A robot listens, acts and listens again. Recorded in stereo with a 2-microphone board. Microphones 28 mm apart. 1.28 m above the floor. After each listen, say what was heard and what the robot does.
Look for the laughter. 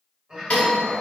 The laughter: about 25° right or 155° right. Turn 25° right.
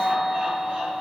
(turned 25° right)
Keep listening.
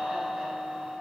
Keep listening.
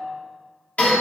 I heard laughter, but can't make it out now. It was about straight ahead or 130° right.